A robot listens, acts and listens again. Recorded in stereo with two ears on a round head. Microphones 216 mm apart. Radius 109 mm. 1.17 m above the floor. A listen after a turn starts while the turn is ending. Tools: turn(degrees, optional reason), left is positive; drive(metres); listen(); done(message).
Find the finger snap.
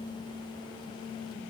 listen()
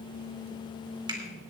turn(degrees=-20, reason="The finger snap: about 20° right or 160° right.")
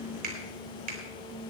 turn(degrees=-140, reason="So it is at 140° right.")
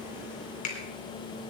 turn(degrees=35, reason="The finger snap is now 35° left.")
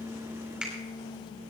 done("Found it: a finger snap, straight ahead, 2 to 4 m away.")